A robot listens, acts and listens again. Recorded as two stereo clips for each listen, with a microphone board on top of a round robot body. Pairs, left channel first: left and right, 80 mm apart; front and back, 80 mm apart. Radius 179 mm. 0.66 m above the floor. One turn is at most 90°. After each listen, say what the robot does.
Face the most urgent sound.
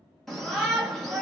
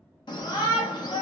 Found it: a shout, straight ahead.